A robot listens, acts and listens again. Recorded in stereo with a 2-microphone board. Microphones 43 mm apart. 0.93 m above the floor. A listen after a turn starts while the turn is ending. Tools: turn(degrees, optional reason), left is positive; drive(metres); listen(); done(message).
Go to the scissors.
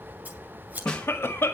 turn(degrees=-40, reason="The scissors: about 40° right or 140° right.")
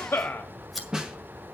drive(metres=1.0)
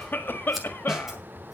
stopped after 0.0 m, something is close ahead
listen()
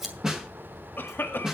done("Something is in my way. I am facing the scissors but have not reached it.")